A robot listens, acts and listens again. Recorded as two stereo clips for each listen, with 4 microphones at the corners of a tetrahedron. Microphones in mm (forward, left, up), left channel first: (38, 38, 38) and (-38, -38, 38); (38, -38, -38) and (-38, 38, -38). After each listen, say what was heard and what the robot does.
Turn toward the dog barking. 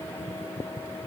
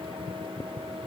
Keep listening.
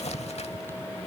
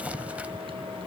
Keep listening.
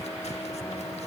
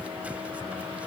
I can't make out a dog barking to turn to.